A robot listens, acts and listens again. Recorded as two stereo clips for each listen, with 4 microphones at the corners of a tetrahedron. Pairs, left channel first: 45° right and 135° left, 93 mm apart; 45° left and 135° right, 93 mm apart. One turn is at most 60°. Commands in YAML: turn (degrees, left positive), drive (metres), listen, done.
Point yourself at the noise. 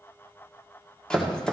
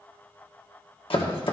turn: 35
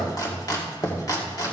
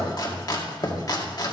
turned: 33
done: "Found it: chopping, straight ahead, 2 to 4 m away."